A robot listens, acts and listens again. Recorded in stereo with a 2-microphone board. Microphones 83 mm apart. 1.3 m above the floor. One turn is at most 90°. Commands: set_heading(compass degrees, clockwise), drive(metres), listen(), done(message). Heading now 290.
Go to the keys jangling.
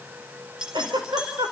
set_heading(320)
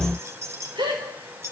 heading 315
set_heading(45)
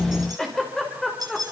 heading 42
set_heading(97)
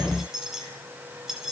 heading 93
drive(1.0)
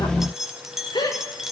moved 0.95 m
drive(1.0)
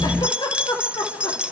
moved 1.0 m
set_heading(108)
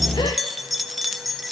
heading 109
drive(1.0)
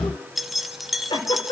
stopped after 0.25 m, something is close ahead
done("Arrived at the keys jangling, straight ahead.")